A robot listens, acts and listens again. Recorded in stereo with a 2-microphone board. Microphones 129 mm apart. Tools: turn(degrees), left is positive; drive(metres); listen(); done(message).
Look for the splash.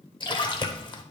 turn(degrees=35)
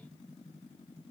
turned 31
listen()
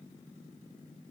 done("I heard a splash, but can't make it out now. It was about 5° left or 110° left.")